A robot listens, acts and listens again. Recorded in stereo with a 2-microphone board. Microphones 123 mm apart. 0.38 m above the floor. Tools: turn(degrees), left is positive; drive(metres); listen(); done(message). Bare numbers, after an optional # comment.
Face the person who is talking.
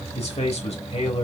# The man speaking: about 60° left or 120° left.
turn(60)
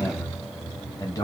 # So it is at 35° left.
turn(35)
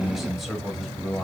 done("Found it: a man speaking, straight ahead, 1 to 2 m away.")